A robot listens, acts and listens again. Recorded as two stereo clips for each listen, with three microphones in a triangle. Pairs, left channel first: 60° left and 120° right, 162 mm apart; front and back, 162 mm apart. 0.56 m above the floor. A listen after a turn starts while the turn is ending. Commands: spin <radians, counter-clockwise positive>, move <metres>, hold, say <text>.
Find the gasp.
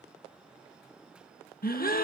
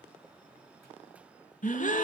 spin 0.61
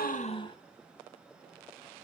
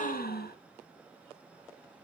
say Facing the gasp, 1 to 2 m away.